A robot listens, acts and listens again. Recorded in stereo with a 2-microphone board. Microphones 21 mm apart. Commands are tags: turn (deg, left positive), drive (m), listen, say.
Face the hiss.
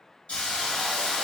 <turn deg="70"/>
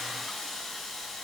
<say>Facing the hiss, 1 to 2 m away.</say>